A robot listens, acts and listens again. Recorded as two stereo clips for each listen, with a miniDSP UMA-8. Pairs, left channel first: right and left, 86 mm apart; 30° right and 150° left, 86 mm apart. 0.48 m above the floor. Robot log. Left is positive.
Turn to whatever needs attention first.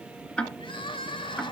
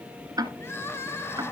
note: The crying: 90° right.
cmd yaw -90
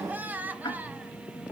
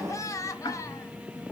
note: The crying is now 20° left.
cmd yaw +20
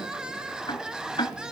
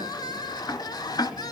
note: The crying is now 10° left.
cmd yaw +10
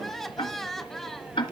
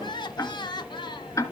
end: Found it: crying, straight ahead, 1 to 2 m away.